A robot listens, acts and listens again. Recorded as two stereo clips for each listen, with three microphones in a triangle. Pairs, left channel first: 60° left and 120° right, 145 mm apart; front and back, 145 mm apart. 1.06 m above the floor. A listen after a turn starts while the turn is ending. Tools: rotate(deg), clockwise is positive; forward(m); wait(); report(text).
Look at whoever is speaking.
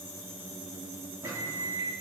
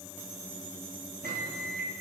wait()
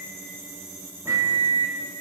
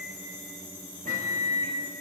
wait()
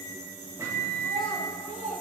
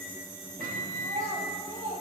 rotate(140)
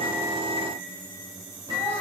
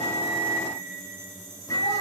wait()
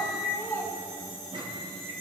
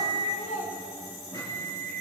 rotate(15)
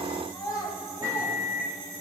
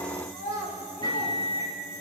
report("Facing the child speaking, over 4 m away.")